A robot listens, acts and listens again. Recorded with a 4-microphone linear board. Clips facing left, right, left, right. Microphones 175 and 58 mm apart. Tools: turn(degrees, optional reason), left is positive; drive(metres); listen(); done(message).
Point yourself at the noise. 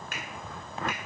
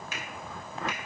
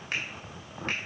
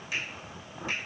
turn(degrees=55, reason="The finger snap: about 55° left or 125° left.")
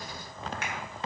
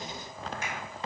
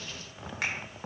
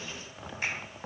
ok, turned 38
turn(degrees=85, reason="So it is at 85° left.")
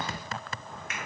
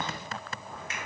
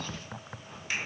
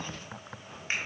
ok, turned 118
turn(degrees=-30, reason="The finger snap is now 30° right.")
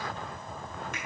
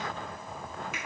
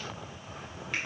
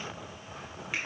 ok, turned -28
listen()
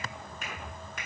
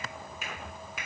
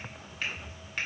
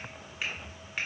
done("Found it: a finger snap, straight ahead.")